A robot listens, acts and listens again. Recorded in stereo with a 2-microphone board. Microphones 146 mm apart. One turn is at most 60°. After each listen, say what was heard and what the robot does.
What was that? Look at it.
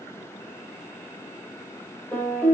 Turn 30° left.
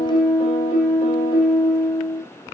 So it is at 140° left. Turn 60° left.
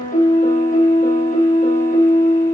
The piano is now 85° left. Turn 60° left.
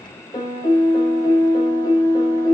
The piano is now 30° left. Turn 30° left.
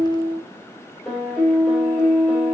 Found it: a piano, straight ahead.